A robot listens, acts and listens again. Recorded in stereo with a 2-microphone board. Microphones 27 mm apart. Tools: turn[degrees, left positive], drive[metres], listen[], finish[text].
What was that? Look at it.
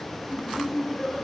Action: turn[-30]
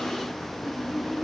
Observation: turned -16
Action: turn[30]
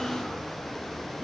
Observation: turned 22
Action: listen[]
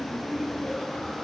Action: finish[Facing the laughter.]